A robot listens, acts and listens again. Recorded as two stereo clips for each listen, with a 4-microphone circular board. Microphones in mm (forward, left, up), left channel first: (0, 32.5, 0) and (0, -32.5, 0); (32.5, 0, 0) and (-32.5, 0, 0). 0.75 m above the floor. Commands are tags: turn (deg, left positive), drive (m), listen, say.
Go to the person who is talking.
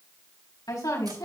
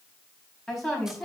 <turn deg="85"/>
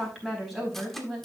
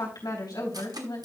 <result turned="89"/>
<drive m="1.0"/>
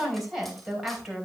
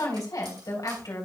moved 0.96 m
<drive m="1.0"/>
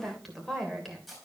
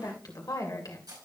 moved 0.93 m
<drive m="1.0"/>
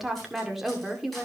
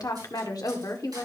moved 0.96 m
<drive m="1.0"/>
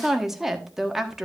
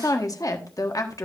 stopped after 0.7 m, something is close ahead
<say>I am next to the woman speaking.</say>